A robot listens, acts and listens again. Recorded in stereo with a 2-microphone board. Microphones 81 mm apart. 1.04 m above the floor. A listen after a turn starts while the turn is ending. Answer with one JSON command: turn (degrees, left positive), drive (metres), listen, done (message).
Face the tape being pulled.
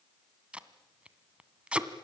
{"turn": -30}
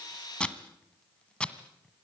{"turn": 15}
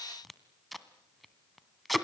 {"done": "Facing the tape being pulled."}